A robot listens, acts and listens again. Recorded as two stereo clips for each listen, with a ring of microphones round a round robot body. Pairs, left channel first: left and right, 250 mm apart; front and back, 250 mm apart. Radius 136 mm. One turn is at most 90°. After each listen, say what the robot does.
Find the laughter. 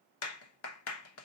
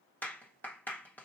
Keep listening.
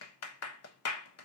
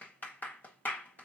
Keep listening.
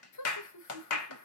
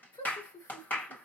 Turn 80° left.
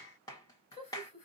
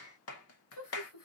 Turn 25° left.
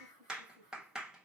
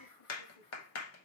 Turn 10° left.
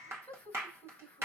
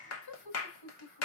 Facing the laughter, 2 to 4 m away.